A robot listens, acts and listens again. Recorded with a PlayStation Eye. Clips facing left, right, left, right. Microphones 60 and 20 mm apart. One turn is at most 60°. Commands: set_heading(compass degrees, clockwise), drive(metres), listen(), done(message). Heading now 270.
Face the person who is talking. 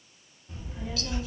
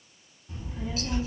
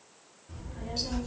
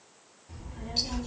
set_heading(255)
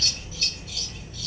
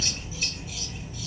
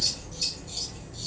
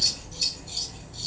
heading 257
set_heading(227)
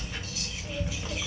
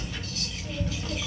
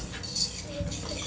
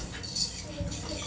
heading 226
set_heading(196)
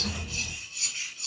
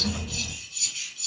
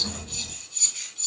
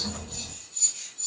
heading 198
set_heading(213)
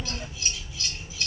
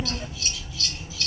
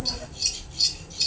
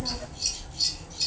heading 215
set_heading(240)
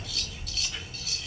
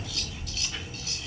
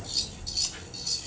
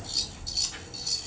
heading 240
done("Facing the child speaking, 1 to 2 m away.")